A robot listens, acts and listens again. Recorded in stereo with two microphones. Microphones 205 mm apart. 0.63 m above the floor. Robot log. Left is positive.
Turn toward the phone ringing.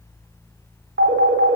cmd yaw -90
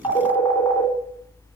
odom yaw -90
note: So it is at 20° left.
cmd yaw +20
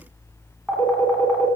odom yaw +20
end: Facing the phone ringing.